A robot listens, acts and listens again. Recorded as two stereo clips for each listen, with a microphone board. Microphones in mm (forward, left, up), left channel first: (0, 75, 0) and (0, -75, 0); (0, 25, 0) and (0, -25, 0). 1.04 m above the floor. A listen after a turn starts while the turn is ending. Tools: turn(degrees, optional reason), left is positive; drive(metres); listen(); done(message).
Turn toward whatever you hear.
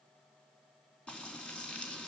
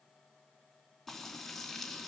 turn(degrees=30)
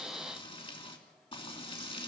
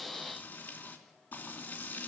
turn(degrees=145, reason="So it is at 145° left.")
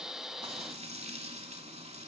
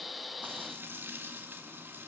turn(degrees=-45, reason="The frying is now 45° right.")
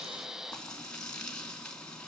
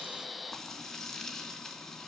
done("Facing the frying.")